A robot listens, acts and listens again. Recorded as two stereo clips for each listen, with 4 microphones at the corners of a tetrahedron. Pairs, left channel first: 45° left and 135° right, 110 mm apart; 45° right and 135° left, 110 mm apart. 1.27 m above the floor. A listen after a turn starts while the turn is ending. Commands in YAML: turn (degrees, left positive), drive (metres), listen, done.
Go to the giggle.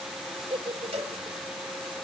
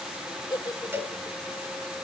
turn: -100
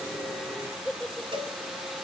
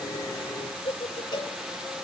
turn: -35
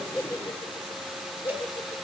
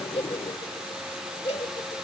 drive: 1.0
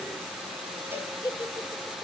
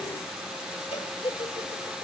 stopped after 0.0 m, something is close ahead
turn: -10
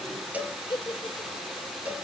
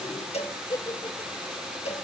done: "Blocked. The giggle is further on, straight ahead."